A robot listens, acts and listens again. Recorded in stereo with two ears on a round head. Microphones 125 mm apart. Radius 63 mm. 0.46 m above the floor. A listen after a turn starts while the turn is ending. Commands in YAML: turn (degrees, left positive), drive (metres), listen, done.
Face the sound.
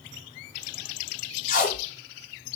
turn: 65
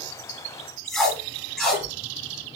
done: "Found it: tape being pulled, straight ahead, 1 to 2 m away."